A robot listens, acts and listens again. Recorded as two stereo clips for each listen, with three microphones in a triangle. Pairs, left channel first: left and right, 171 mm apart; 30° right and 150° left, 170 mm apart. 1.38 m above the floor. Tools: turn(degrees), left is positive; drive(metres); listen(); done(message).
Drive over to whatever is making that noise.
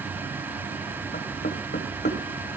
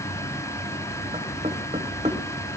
turn(degrees=100)
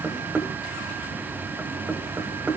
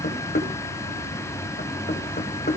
turn(degrees=-10)
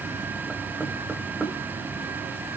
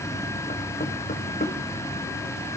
drive(metres=1.0)
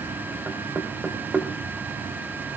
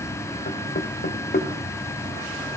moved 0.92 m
turn(degrees=-10)
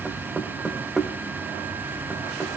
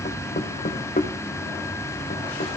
drive(metres=1.0)
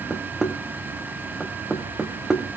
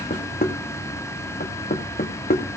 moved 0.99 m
drive(metres=1.0)
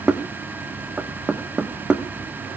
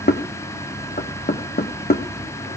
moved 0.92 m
drive(metres=1.0)
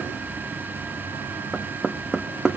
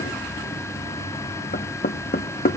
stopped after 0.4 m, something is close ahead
done("Arrived at the knocking, straight ahead.")